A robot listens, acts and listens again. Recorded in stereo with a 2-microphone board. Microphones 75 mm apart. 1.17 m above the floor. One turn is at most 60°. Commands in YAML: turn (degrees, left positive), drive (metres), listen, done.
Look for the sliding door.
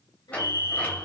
turn: 20
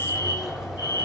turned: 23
done: "Facing the sliding door, over 4 m away."